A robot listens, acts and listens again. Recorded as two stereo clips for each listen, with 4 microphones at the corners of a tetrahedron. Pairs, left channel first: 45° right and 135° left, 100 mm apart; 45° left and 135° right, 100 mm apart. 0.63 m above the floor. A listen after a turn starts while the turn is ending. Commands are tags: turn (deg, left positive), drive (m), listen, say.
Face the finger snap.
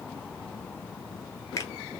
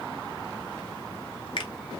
<turn deg="10"/>
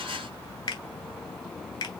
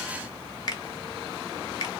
<say>Found it: a finger snap, straight ahead, 1 to 2 m away.</say>